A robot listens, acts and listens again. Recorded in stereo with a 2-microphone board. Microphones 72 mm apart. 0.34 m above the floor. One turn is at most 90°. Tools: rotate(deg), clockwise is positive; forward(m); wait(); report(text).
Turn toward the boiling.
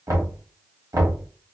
wait()
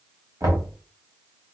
wait()
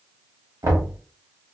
report("I can't make out boiling, only knocking.")